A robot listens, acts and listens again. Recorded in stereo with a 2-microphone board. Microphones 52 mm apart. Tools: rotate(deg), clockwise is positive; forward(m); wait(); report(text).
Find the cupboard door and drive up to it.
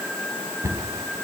rotate(90)
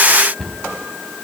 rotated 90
forward(1.0)
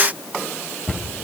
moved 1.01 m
forward(1.0)
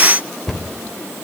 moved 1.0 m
rotate(-10)
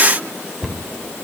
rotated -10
forward(1.0)
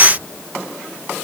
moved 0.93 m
rotate(10)
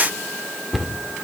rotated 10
forward(1.0)
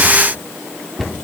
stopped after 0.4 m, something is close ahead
rotate(-10)
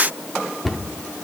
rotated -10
report("I am next to the cupboard door.")